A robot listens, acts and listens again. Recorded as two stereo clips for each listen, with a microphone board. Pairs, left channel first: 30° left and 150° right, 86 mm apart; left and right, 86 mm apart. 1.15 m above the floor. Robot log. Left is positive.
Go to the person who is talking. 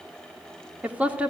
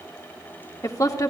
note: The woman speaking: 135° left.
cmd yaw +135
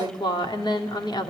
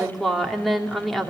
cmd fwd 1.0
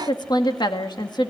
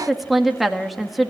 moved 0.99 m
cmd fwd 1.0
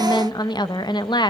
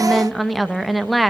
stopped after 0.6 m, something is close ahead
end: Arrived at the woman speaking, straight ahead.